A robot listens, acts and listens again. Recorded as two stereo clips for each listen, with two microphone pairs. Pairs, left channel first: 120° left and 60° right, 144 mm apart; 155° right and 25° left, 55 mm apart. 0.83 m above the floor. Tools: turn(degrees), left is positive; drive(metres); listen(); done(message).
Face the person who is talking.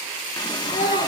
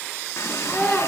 turn(degrees=130)
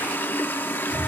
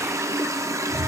listen()
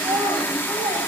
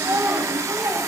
done("Facing the child speaking, 2 to 4 m away.")